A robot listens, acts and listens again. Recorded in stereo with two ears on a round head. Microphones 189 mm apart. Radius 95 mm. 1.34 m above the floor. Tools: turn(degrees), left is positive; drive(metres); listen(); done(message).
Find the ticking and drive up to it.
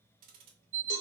turn(degrees=-45)
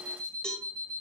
listen()
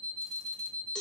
listen()
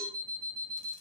done("I heard ticking, but can't make it out now. It was about straight ahead or 90° right. I did not reach it.")